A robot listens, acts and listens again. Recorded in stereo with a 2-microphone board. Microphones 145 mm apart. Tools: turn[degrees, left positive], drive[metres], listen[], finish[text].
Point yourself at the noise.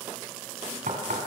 Thought: The knocking: about 70° right or 110° right.
Action: turn[-70]
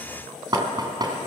Thought: So it is at 30° right.
Action: turn[-30]
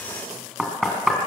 Action: finish[Found it: knocking, straight ahead.]